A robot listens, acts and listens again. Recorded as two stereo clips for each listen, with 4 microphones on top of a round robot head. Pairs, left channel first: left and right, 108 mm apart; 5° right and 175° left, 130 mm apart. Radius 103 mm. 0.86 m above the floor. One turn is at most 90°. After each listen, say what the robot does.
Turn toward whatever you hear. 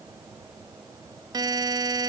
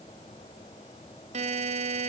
Turn 90° right.
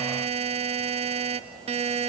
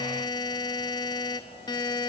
Turn 65° right.
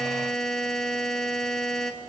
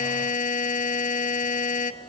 Found it: a buzzer, straight ahead, 1 to 2 m away.